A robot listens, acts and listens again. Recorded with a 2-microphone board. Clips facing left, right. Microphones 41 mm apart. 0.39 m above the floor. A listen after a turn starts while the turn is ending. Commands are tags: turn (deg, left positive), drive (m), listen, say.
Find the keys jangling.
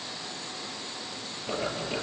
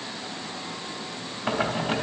<listen/>
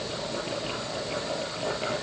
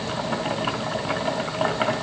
<listen/>
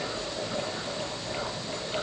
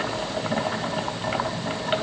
<say>I can't make out keys jangling to turn to.</say>